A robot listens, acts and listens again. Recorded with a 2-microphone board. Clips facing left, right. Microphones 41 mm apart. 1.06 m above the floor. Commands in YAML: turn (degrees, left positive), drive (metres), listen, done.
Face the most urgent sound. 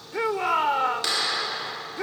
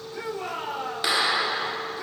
turn: 90
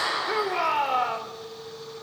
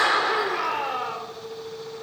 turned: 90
turn: 10
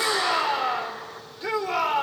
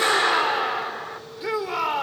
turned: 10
done: "Facing the shout, 2 to 4 m away."